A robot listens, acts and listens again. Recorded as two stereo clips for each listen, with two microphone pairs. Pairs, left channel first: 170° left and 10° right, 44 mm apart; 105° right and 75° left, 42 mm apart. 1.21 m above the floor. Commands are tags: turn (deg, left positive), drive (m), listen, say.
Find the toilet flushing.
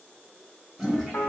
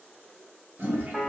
<turn deg="70"/>
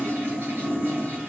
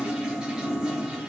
<say>Facing the toilet flushing, 1 to 2 m away.</say>